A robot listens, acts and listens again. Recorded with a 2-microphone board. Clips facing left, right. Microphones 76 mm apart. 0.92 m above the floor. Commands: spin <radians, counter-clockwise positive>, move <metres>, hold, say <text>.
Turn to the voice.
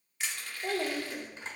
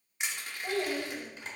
spin 1.22
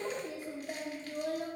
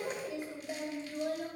spin 0.61
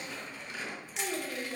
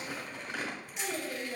say Facing the child speaking, 1 to 2 m away.